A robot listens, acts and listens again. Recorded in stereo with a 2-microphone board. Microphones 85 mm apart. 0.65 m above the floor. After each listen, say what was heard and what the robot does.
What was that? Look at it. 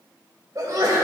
The sneeze: about 45° right or 135° right. Turn 45° right.
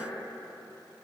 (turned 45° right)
Keep listening.
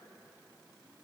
I heard a sneeze, but can't make it out now. It was about straight ahead or 90° right.